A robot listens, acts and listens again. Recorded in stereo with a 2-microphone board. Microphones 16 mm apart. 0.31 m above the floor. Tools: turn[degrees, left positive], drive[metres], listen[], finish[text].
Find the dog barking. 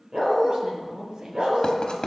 Thought: The dog barking: about 60° right or 120° right.
Action: turn[-60]
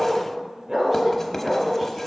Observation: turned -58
Thought: So it is at 35° right.
Action: turn[-35]
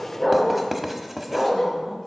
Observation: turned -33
Thought: The dog barking is now 25° left.
Action: turn[25]
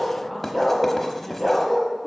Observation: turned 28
Action: finish[Found it: a dog barking, straight ahead, 2 to 4 m away.]